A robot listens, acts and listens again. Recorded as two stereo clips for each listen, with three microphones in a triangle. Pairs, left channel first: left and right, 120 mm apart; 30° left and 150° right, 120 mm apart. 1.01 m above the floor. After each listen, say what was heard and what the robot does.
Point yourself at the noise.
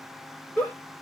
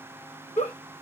The giggle: 10° left. Turn 10° left.
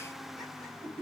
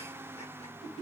Facing the giggle.